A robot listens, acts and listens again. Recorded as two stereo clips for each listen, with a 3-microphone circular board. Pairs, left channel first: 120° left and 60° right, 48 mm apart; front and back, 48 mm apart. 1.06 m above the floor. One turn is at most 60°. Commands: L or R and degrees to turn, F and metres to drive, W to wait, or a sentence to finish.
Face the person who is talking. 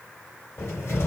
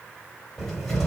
W
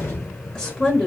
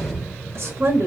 R60
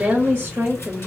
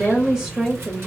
R60
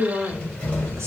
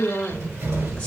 R60
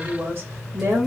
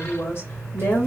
R40
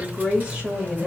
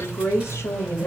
R10
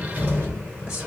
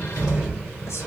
W
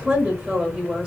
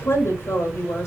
Found it: a woman speaking, straight ahead.